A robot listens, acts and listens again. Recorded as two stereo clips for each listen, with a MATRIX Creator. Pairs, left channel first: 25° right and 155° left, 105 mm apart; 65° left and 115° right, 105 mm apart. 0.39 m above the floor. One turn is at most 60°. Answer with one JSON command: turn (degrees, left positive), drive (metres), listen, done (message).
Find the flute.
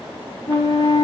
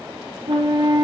{"turn": -60}
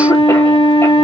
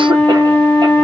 {"done": "Facing the flute, under 1 m away."}